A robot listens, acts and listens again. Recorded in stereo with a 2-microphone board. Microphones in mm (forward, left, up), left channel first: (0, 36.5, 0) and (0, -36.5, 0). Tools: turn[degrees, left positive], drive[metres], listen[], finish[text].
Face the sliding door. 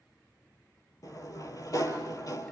Thought: The sliding door: about 55° left or 125° left.
Action: turn[55]
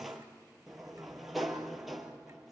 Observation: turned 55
Action: finish[Found it: a sliding door, straight ahead.]